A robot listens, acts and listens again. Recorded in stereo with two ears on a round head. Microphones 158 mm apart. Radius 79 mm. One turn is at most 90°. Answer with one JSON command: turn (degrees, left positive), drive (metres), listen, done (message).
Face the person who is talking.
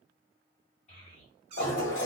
{"turn": 40}
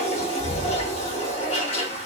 {"listen": true}
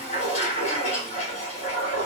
{"listen": true}
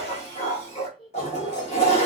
{"done": "Facing the child speaking, 1 to 2 m away."}